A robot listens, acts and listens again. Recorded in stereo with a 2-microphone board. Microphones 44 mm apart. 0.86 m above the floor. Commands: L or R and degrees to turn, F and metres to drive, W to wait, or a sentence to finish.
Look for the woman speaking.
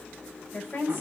L50
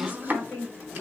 L70
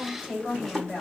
L20
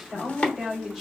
Found it: a woman speaking, straight ahead, 1 to 2 m away.